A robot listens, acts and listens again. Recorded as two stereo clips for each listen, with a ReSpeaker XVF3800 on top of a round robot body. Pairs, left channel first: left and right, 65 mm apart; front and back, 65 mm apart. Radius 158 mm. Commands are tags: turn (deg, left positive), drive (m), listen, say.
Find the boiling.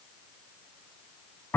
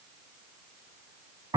<listen/>
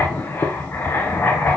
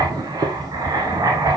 <listen/>
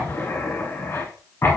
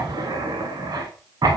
<say>I can't make out boiling to turn to.</say>